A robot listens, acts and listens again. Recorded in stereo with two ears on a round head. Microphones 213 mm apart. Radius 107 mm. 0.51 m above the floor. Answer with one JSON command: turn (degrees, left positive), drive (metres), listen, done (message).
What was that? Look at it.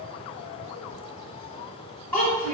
{"turn": 30}
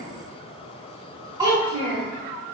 {"turn": -20}
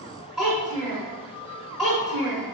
{"done": "Facing the child speaking."}